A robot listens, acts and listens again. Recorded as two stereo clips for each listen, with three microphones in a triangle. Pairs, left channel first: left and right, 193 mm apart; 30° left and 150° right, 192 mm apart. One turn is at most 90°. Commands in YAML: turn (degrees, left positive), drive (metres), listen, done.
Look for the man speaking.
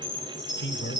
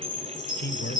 turn: 65
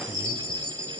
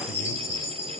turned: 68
listen: true
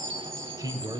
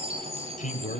turn: -20
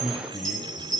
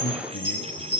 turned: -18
done: "Found it: a man speaking, straight ahead."